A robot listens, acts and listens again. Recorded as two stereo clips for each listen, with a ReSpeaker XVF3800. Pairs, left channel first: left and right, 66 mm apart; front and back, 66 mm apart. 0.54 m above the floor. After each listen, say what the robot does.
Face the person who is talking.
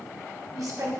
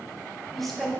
Turn 80° right.
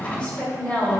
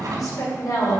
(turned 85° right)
Turn 25° left.
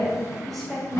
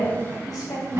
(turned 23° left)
Found it: a woman speaking, straight ahead, 2 to 4 m away.